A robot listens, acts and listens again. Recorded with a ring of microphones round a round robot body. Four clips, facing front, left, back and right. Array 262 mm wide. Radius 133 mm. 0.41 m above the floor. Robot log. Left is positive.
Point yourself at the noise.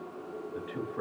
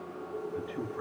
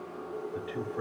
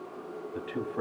note: The man speaking: 90° right.
cmd yaw -90
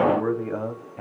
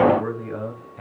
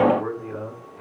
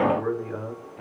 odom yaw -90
note: The man speaking is now 15° left.
cmd yaw +15
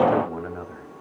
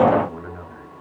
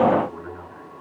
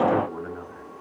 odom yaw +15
note: The man speaking is now 10° left.
cmd yaw +10
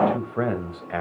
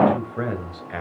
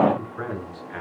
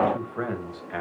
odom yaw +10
note: The man speaking is now 10° left.
cmd yaw +10
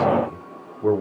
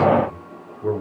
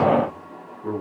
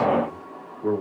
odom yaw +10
note: The man speaking is now 10° left.
cmd yaw +10
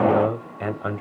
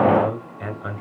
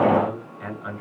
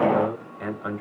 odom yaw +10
end: Found it: a man speaking, straight ahead, 2 to 4 m away.